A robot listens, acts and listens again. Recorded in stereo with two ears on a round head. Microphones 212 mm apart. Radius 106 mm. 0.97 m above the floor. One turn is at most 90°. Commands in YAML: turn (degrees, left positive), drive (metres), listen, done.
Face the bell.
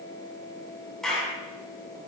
listen: true
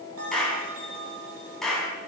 turn: -65
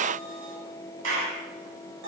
turn: -50
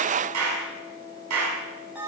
done: "Facing the bell, over 4 m away."